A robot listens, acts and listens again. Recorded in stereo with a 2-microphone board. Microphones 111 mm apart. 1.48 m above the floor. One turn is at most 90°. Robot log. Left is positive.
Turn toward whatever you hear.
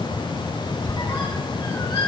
note: The squeak: about 45° left or 135° left.
cmd yaw +45
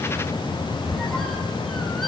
end: Found it: a squeak, straight ahead, 2 to 4 m away.